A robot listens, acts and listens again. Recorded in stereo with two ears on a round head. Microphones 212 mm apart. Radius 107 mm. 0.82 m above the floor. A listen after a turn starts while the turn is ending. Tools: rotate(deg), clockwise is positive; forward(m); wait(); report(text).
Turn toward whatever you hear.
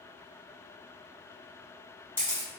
rotate(30)
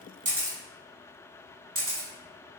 rotate(140)
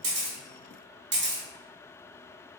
rotate(50)
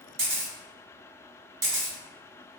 rotate(15)
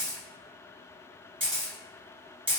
report("Facing the camera shutter, 1 to 2 m away.")